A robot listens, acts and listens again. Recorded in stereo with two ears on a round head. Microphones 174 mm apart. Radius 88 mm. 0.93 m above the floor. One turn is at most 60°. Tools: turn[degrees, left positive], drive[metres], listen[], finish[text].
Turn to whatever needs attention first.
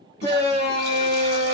Thought: The shout: about 55° left or 125° left.
Action: turn[55]
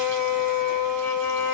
Action: finish[Facing the shout, 2 to 4 m away.]